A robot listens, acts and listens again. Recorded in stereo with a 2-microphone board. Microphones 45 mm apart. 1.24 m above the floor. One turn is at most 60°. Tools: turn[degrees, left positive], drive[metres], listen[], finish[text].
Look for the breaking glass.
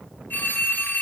Action: listen[]
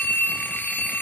Action: listen[]
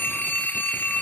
Action: finish[I can't make out breaking glass to turn to.]